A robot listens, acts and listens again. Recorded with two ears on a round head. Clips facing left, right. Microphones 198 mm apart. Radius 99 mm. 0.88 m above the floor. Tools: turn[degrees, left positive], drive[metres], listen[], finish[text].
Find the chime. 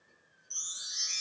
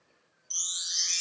Thought: The chime: about 50° right or 130° right.
Action: turn[-50]
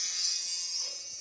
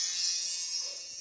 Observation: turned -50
Action: finish[Found it: a chime, straight ahead, 1 to 2 m away.]